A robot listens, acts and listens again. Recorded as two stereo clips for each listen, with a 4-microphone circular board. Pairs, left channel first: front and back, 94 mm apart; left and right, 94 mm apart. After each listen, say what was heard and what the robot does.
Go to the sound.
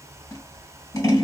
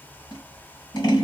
The scissors: 50° left. Turn 50° left.
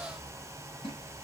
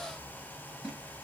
Keep listening.
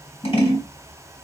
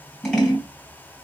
Drive 1.0 m forward.
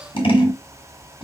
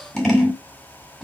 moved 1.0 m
Drive 1.0 m forward.
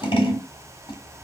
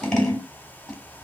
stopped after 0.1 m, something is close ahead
The scissors is now 10° left. Turn 10° left.
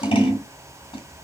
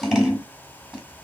Arrived at the scissors, straight ahead.